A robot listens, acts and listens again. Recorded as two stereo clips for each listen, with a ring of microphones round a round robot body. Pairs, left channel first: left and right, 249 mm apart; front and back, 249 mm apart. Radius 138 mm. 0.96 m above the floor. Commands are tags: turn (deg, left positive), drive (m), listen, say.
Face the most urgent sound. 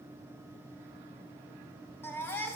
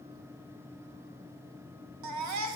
<turn deg="175"/>
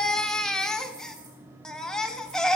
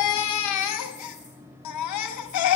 <say>Found it: a baby crying, straight ahead, 1 to 2 m away.</say>